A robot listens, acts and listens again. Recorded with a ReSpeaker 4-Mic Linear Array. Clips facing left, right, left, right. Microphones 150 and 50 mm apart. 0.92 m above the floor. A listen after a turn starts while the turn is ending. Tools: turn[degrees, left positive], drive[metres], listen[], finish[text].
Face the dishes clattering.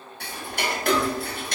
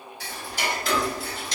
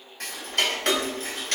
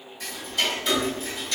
Action: listen[]
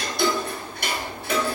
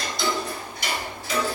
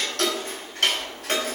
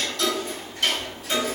Action: listen[]
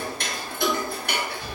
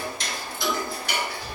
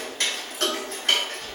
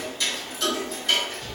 Action: finish[I can't make out dishes clattering to turn to.]